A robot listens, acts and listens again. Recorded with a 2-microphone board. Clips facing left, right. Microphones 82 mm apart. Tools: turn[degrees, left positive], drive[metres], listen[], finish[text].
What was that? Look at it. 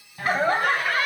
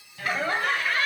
Action: turn[30]
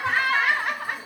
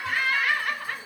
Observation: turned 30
Thought: The laughter: about 20° left or 160° left.
Action: turn[20]
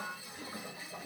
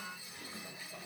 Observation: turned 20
Thought: The laughter: about 25° left or 155° left.
Action: turn[25]
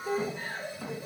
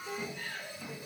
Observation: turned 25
Thought: So it is at 150° left.
Action: turn[150]
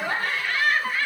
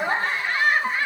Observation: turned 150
Thought: The laughter is now 25° right.
Action: turn[-25]
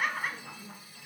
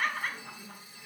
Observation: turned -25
Thought: The laughter is now 10° left.
Action: turn[10]
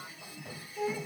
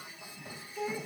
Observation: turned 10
Action: finish[Found it: laughter, straight ahead, 2 to 4 m away.]